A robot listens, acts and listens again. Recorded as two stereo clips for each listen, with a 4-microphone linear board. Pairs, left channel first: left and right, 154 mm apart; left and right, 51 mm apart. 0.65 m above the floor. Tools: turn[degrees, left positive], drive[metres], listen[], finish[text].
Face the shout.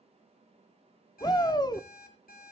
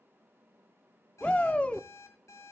Thought: The shout: about 25° left or 155° left.
Action: turn[25]
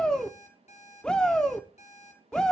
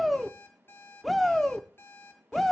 Action: finish[Facing the shout.]